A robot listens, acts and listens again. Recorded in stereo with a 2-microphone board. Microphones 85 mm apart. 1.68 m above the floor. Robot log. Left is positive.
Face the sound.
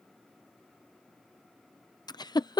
note: The giggle: about 55° left or 125° left.
cmd yaw +55
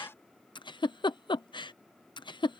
note: So it is at 70° left.
cmd yaw +70
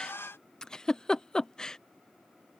note: The giggle is now 10° left.
cmd yaw +10
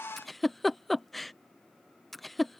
end: Found it: a giggle, straight ahead.